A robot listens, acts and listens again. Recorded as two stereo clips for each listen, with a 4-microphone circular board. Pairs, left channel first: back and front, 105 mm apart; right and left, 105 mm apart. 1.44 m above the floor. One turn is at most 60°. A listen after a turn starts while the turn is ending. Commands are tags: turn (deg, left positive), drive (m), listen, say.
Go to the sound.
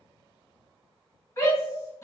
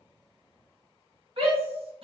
<turn deg="60"/>
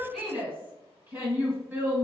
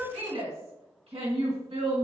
<turn deg="60"/>
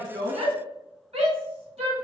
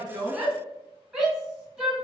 <turn deg="10"/>
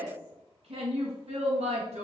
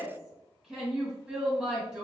<drive m="1.0"/>
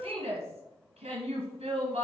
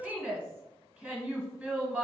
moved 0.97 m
<turn deg="15"/>
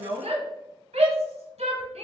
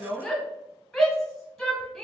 <drive m="1.0"/>
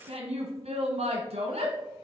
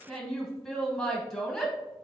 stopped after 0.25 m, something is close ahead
<say>I am next to the shout.</say>